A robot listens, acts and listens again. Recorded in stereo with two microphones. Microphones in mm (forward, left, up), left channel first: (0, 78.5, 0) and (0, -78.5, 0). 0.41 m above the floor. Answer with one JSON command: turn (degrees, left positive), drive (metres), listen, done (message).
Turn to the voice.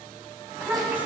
{"turn": -30}
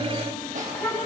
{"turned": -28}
{"turn": 20}
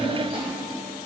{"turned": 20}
{"listen": true}
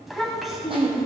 {"done": "Found it: a child speaking, straight ahead, 2 to 4 m away."}